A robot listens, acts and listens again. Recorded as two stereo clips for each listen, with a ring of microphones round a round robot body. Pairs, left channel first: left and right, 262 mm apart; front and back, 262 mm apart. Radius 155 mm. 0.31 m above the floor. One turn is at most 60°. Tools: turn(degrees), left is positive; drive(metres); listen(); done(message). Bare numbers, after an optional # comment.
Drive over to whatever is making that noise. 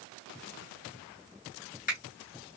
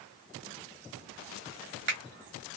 # The finger snap: 145° left.
turn(60)
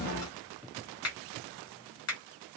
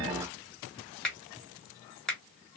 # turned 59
# The finger snap is now 85° left.
turn(60)
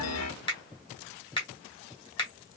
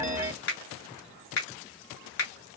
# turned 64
# The finger snap is now 20° left.
turn(20)
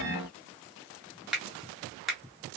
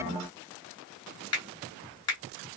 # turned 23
drive(1.0)
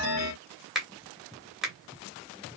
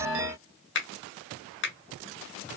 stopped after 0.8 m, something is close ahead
done("I am next to the finger snap.")